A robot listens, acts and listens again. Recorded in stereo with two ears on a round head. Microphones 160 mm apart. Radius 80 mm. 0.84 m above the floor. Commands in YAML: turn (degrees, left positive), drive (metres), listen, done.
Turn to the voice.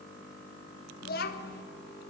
turn: 60
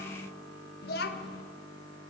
turn: 60
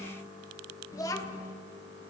turn: 20
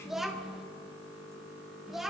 done: "Facing the child speaking, 1 to 2 m away."